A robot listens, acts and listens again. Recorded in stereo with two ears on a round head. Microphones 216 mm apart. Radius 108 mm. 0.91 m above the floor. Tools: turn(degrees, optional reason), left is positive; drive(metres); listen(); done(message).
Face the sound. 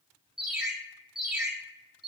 turn(degrees=30)
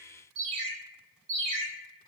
turn(degrees=-30, reason="So it is at 30° right.")
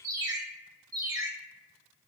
turn(degrees=-15, reason="The ringtone is now 15° right.")
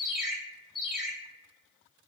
done("Found it: a ringtone, straight ahead.")